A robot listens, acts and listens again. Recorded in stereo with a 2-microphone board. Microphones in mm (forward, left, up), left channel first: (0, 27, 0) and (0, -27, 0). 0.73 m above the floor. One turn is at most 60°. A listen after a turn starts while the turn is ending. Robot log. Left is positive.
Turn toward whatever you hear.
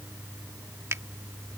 note: The finger snap: about 60° right or 120° right.
cmd yaw -60
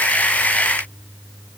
cmd idle
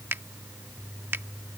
note: So it is at 50° right.
cmd yaw -50
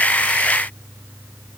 cmd idle
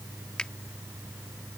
note: The finger snap is now 20° left.
cmd yaw +20
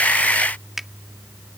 end: Facing the finger snap.